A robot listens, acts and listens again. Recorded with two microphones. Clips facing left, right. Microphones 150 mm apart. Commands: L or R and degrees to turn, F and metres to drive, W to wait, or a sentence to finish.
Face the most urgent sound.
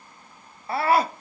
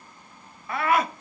L30
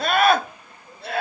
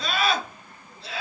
L115
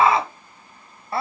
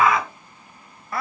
L30
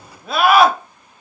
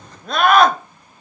Facing the scream.